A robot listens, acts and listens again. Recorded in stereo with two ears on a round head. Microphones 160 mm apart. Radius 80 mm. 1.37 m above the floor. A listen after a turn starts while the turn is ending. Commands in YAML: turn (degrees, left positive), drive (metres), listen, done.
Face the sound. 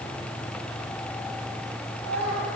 turn: -90
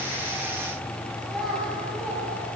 done: "Found it: a child speaking, straight ahead, over 4 m away."